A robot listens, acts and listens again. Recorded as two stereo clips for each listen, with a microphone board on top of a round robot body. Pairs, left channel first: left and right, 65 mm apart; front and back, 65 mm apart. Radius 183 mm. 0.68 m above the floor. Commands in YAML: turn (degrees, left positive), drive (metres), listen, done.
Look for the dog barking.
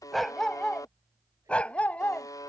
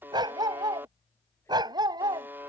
turn: 160
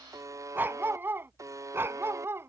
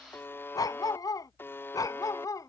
turn: -35
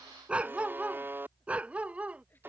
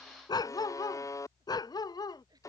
turn: -20
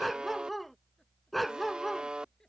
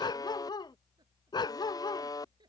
done: "Facing the dog barking."